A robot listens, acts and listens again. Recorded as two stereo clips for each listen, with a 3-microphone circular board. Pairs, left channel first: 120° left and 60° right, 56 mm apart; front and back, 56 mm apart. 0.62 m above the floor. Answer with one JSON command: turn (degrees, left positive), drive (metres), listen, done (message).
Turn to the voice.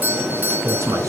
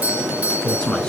{"turn": -75}
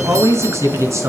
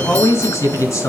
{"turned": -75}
{"turn": -30}
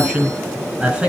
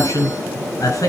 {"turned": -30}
{"turn": 10}
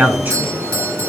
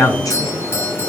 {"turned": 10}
{"done": "Found it: a man speaking, straight ahead, over 4 m away."}